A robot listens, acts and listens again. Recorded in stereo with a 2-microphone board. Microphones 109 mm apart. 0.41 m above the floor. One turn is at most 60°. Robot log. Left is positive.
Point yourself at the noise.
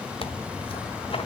note: The tearing paper: about 60° left or 120° left.
cmd yaw +60
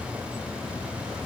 cmd idle
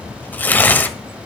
note: So it is at 20° left.
cmd yaw +20
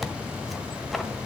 end: Found it: tearing paper, straight ahead.